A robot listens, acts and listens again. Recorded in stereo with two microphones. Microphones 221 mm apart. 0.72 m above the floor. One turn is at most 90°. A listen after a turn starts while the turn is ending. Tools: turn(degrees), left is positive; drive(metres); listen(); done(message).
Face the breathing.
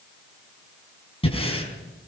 turn(degrees=25)
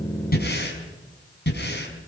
turn(degrees=90)
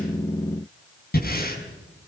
turn(degrees=45)
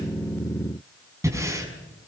turn(degrees=-10)
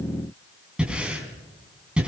done("Found it: breathing, straight ahead, over 4 m away.")